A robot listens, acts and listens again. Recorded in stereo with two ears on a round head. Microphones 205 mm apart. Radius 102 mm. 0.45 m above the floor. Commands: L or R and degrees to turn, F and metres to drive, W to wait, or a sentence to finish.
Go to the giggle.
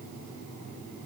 W
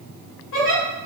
L60
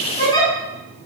L25
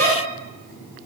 L15
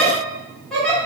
F1.0
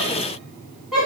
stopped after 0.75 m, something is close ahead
I am next to the giggle.